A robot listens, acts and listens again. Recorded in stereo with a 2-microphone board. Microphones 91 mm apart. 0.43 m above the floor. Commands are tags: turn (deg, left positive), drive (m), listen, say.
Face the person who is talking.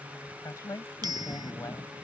<turn deg="40"/>
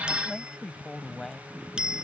<say>Found it: a woman speaking, straight ahead.</say>